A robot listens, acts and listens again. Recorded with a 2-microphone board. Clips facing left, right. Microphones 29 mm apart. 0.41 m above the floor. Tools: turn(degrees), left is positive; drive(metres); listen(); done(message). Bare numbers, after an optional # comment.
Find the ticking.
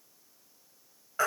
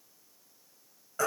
listen()
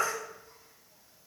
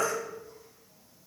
listen()
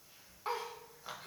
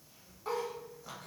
done("I can't make out ticking to turn to.")